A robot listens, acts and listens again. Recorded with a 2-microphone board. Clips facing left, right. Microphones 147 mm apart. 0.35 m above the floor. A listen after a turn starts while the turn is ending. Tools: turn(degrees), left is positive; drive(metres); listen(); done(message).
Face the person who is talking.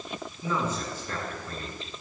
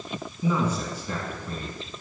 turn(degrees=-30)
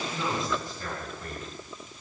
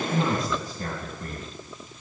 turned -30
turn(degrees=-135)
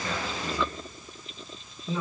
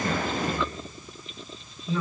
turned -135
turn(degrees=25)
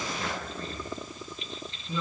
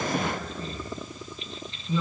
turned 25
turn(degrees=-15)
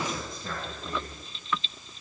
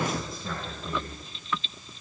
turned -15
done("Found it: a man speaking, straight ahead, 2 to 4 m away.")